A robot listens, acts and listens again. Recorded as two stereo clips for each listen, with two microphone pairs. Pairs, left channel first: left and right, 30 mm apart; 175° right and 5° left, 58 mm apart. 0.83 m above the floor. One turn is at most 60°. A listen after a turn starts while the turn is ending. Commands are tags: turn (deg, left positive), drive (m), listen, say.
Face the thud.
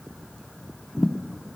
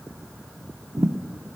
<turn deg="45"/>
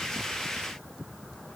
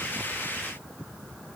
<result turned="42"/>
<say>I heard a thud from this way, but can't make it out now.</say>